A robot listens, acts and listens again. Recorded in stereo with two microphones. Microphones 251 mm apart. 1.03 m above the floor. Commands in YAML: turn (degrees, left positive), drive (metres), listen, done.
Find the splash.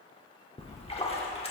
turn: 25
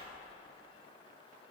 listen: true
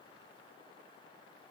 done: "I heard a splash, but can't make it out now. It was about straight ahead or 130° left."